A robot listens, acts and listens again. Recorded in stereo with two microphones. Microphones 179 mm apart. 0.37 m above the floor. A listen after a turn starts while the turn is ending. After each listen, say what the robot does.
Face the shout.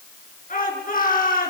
Turn 50° left.
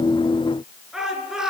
Facing the shout.